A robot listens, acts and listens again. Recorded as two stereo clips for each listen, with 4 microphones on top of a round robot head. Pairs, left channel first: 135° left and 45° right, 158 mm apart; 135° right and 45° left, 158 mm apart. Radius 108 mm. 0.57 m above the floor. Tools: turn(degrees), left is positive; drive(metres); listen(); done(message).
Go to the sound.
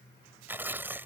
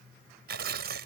turn(degrees=30)
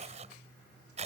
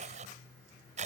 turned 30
drive(metres=1.0)
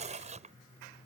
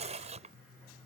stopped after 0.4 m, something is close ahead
done("Something is in my way. I am facing the tearing paper but have not reached it.")